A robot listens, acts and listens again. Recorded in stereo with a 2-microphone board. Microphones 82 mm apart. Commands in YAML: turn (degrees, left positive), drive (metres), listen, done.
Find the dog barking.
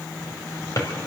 listen: true
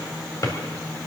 listen: true
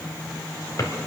done: "I can't make out a dog barking, only a drawer."